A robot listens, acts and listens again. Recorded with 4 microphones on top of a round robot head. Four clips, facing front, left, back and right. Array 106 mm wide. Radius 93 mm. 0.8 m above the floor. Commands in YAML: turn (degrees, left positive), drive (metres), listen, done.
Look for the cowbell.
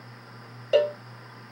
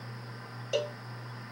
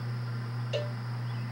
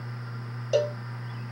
turn: -20
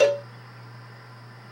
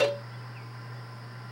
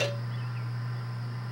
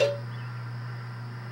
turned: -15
done: "Facing the cowbell."